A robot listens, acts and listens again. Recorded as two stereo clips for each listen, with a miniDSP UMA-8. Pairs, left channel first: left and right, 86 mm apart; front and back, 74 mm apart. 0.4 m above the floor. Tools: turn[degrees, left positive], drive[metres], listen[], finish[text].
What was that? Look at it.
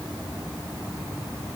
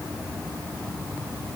Action: listen[]
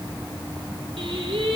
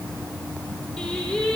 Thought: The singing: 80° right.
Action: turn[-80]
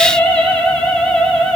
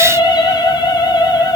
Action: finish[Facing the singing, 2 to 4 m away.]